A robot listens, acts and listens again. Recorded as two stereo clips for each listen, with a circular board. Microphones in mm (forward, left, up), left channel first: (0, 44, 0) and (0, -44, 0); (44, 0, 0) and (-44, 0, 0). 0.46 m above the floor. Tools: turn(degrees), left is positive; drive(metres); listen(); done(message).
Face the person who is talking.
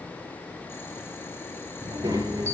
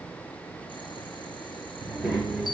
turn(degrees=-95)
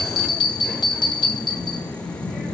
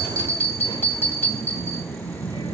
done("Facing the child speaking, over 4 m away.")